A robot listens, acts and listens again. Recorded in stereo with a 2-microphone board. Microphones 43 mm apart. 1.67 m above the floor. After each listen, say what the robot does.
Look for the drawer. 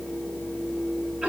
Keep listening.
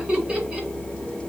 Keep listening.
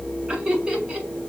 I can't make out a drawer, only laughter.